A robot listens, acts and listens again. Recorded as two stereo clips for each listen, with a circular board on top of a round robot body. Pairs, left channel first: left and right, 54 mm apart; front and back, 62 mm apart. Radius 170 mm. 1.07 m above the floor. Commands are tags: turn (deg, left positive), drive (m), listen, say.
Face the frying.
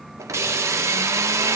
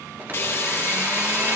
<turn deg="-55"/>
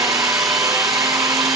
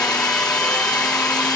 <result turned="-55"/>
<listen/>
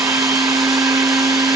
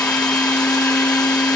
<listen/>
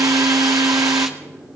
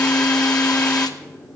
<say>I heard frying from this way, but can't make it out now.</say>